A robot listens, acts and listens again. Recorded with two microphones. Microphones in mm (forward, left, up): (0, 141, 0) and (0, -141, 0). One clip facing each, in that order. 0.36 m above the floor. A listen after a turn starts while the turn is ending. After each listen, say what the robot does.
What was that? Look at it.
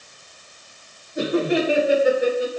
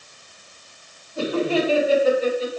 Turn 30° left.
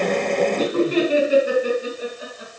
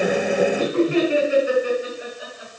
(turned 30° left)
Turn 140° left.
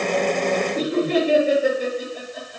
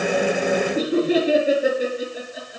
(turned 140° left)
Turn 10° right.
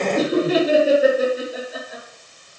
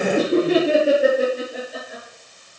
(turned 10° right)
Found it: laughter, straight ahead, over 4 m away.